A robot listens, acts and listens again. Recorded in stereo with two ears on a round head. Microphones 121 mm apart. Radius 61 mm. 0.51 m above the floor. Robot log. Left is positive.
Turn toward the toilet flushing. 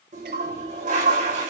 note: The toilet flushing: about 60° right or 120° right.
cmd yaw -60
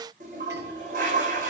note: So it is at 60° right.
cmd yaw -60
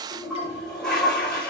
end: Found it: a toilet flushing, straight ahead.